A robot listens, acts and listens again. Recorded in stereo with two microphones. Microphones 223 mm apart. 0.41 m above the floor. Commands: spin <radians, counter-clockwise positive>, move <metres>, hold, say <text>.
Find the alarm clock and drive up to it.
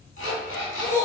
spin 1.13
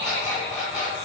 move 1.0
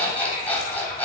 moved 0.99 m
spin 0.17
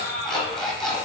move 1.0
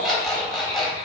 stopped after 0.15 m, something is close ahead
say Arrived at the alarm clock, straight ahead.